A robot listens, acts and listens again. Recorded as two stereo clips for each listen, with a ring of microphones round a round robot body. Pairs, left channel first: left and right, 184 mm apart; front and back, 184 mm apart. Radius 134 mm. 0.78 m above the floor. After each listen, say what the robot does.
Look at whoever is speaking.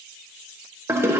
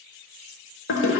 Keep listening.
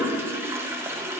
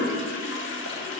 Keep listening.
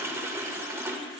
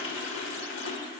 I can't make out anyone speaking to turn to.